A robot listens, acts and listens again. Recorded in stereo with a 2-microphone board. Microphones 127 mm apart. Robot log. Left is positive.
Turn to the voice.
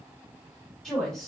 cmd yaw +30
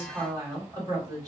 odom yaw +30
note: So it is at 30° right.
cmd yaw -30
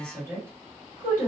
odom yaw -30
note: The woman speaking is now 20° right.
cmd yaw -20
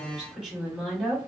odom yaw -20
end: Facing the woman speaking, 1 to 2 m away.